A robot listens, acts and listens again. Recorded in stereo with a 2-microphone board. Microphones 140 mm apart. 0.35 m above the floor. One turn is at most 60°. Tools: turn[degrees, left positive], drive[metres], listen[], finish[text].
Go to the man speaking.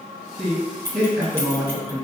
Action: turn[-30]
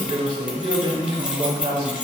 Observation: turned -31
Thought: So it is at 135° right.
Action: turn[-60]
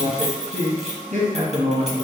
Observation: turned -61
Thought: The man speaking is now 75° right.
Action: turn[-60]
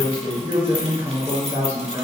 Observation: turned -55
Thought: The man speaking is now 20° right.
Action: turn[-20]
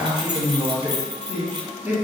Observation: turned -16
Action: drive[1.0]
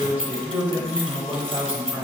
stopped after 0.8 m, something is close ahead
Thought: The man speaking is now 20° right.
Action: turn[-20]
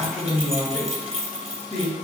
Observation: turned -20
Action: finish[Arrived at the man speaking, straight ahead.]